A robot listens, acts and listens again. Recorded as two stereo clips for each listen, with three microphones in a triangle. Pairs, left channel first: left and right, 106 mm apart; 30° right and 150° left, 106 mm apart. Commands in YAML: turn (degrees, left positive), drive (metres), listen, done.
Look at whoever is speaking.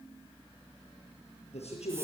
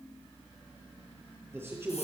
turn: 85
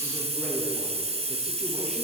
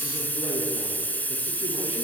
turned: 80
listen: true
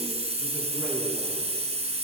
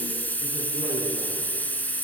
listen: true
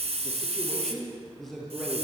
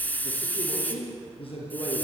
done: "Facing the man speaking, over 4 m away."